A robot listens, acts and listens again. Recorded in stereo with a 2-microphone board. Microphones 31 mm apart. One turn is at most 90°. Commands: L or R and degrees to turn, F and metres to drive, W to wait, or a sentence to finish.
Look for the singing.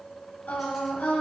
L90
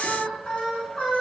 L35
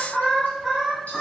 L20
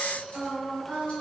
L10
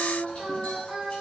Found it: singing, straight ahead, 2 to 4 m away.